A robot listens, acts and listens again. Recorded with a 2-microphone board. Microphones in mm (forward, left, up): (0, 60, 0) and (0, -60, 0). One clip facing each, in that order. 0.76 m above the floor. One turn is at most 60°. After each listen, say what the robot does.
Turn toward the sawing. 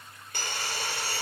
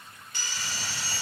Turn 55° left.
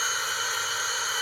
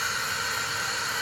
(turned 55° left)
Facing the sawing.